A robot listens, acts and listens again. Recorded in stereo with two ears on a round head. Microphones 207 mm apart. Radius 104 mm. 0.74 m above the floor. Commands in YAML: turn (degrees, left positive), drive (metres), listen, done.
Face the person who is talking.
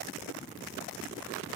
listen: true
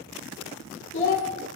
turn: 55
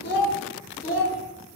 turn: 40
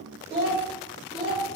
turn: -20
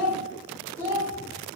turn: -10
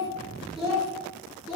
done: "Facing the child speaking, 2 to 4 m away."